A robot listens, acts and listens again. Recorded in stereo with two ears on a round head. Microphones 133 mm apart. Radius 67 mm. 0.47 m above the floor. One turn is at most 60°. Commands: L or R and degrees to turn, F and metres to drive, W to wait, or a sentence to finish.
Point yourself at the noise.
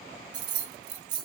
R30
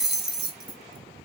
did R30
Facing the keys jangling, under 1 m away.